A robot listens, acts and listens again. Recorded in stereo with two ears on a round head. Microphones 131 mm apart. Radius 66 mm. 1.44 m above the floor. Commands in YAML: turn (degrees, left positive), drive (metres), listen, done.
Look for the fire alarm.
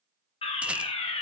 turn: 40
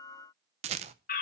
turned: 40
turn: 100
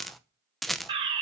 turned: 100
turn: -40
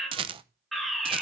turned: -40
done: "Facing the fire alarm, 1 to 2 m away."